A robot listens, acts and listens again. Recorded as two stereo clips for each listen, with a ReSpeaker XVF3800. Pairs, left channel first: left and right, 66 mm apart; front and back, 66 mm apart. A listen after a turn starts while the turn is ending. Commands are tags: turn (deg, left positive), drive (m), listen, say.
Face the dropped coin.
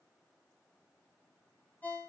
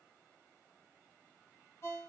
<listen/>
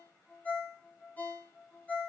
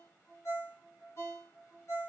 <listen/>
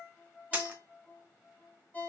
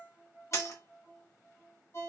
<turn deg="-20"/>
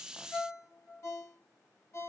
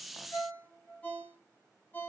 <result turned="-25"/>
<say>I heard a dropped coin from this way, but can't make it out now.</say>